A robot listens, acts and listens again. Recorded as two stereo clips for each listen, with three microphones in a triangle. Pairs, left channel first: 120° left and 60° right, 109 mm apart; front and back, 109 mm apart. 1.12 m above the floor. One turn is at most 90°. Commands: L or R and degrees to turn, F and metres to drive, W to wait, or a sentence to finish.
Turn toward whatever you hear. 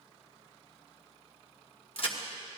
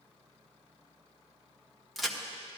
L90
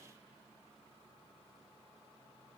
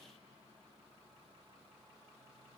I heard a crack from this way, but can't make it out now.